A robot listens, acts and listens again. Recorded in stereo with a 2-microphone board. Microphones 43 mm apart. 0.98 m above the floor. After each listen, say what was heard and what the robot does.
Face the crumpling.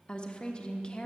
Keep listening.
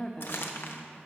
The crumpling: about 65° left or 115° left. Turn 65° left.
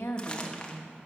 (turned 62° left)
Keep listening.
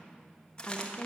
So it is at 30° left. Turn 30° left.
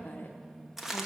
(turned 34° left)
Found it: crumpling, straight ahead.